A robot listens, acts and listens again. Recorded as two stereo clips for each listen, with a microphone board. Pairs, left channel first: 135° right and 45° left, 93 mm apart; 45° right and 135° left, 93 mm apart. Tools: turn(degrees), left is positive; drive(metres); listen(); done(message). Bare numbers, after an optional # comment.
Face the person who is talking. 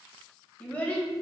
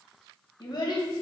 # The child speaking: 65° right.
turn(-65)
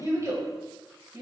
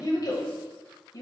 done("Found it: a child speaking, straight ahead, under 1 m away.")